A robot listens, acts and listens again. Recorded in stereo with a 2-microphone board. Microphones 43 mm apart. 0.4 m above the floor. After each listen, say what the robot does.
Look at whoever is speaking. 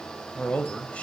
Turn 30° left.
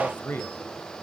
Turn 110° left.
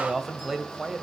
Facing the man speaking.